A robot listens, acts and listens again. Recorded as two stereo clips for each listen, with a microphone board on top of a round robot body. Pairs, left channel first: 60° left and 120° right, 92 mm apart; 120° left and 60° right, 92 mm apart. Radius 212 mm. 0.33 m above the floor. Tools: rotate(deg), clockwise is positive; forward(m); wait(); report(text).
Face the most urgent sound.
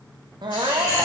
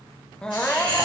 rotate(160)
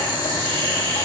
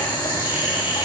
wait()
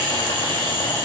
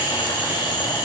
wait()
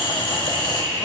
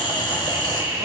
report("Facing where the crying came from. I can't hear it now.")